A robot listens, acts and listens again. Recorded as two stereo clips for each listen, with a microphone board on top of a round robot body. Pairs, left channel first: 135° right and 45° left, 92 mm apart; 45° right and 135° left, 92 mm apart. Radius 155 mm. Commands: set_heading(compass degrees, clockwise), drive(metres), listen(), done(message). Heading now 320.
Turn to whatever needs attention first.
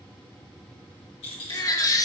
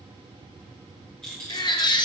set_heading(45)
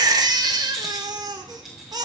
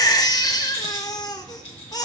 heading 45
done("Facing the baby crying.")